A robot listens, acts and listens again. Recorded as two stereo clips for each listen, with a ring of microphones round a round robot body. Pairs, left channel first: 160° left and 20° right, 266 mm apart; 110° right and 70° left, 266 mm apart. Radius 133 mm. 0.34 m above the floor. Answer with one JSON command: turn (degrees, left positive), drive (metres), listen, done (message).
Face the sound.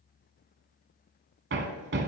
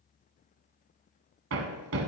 {"turn": 30}
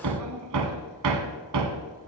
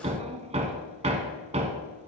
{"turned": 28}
{"done": "Found it: hammering, straight ahead."}